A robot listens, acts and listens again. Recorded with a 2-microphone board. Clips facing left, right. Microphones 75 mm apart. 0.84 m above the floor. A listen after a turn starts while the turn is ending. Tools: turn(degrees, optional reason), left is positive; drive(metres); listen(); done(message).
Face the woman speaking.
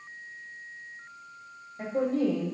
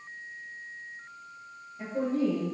turn(degrees=65, reason="The woman speaking: about 65° left or 115° left.")
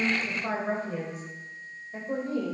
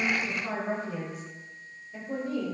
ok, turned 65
turn(degrees=35, reason="So it is at 35° left.")
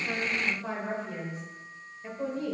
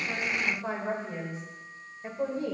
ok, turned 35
turn(degrees=-30, reason="The woman speaking is now 30° right.")
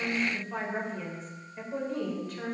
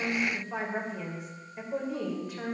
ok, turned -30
turn(degrees=-10, reason="The woman speaking is now 10° right.")
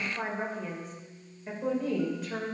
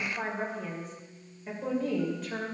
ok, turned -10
done("Facing the woman speaking.")